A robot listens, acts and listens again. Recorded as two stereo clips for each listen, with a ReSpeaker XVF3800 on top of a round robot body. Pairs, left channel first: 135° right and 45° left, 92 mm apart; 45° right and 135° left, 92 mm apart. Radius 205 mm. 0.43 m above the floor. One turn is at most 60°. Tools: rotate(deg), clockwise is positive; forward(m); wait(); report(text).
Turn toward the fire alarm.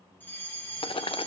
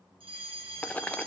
rotate(-60)
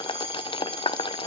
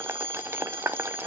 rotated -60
rotate(-60)
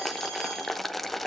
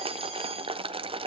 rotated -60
rotate(-55)
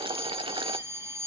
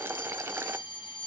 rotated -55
rotate(15)
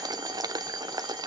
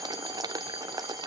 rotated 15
wait()
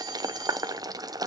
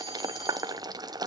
wait()
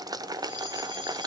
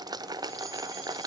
report("I heard a fire alarm from this way, but can't make it out now.")